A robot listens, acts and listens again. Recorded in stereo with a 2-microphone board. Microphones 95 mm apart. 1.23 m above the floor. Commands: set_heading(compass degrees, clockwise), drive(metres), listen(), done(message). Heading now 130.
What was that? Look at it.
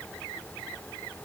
listen()
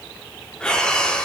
set_heading(100)
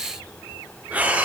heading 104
set_heading(119)
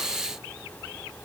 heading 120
listen()
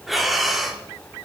done("Facing the breathing.")